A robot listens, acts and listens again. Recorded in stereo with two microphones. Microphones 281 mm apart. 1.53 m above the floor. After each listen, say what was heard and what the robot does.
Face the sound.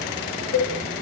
The cowbell: about 50° left or 130° left. Turn 50° left.
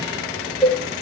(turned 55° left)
Found it: a cowbell, straight ahead.